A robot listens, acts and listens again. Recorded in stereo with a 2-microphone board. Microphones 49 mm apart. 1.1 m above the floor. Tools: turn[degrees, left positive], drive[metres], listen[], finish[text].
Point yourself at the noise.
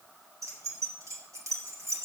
Action: turn[-90]
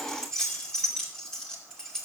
Thought: So it is at 15° left.
Action: turn[15]
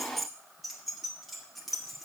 Action: finish[Found it: keys jangling, straight ahead.]